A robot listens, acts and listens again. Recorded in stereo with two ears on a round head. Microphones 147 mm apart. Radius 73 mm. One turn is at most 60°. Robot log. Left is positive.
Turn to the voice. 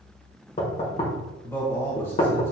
note: The man speaking: about 15° left or 165° left.
cmd yaw +15
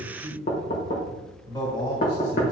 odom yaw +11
note: So it is at 150° left.
cmd yaw +60
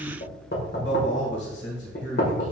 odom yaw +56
note: The man speaking is now 95° left.
cmd yaw +60
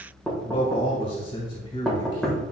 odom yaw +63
note: The man speaking is now 35° left.
cmd yaw +35
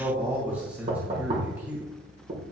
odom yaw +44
note: The man speaking is now 10° right.
cmd yaw -10
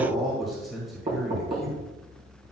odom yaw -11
end: Found it: a man speaking, straight ahead.